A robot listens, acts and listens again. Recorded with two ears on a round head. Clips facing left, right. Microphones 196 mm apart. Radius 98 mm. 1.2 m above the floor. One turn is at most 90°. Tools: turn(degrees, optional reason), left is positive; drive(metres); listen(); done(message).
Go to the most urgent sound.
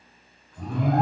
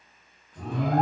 turn(degrees=-90)
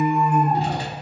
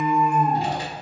drive(metres=1.0)
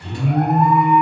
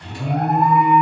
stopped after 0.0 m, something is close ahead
done("Something is in my way. I am facing the alarm but have not reached it.")